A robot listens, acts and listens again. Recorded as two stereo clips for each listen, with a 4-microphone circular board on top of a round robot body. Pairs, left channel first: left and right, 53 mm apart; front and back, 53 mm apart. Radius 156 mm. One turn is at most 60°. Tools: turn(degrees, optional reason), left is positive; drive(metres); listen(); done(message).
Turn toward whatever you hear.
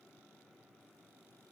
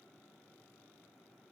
listen()
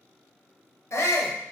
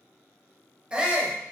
turn(degrees=60, reason="The shout: 110° left.")
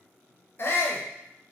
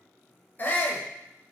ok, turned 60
turn(degrees=50, reason="The shout is now 50° left.")
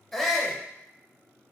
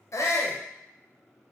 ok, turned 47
done("Facing the shout, under 1 m away.")